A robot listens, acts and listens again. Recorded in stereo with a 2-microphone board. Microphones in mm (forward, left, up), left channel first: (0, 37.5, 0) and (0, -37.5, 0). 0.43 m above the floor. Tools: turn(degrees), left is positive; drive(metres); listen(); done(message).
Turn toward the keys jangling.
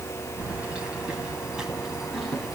turn(degrees=-30)
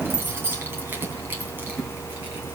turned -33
turn(degrees=-155)
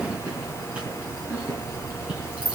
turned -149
turn(degrees=-15)
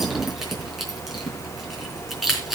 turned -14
done("Found it: keys jangling, straight ahead.")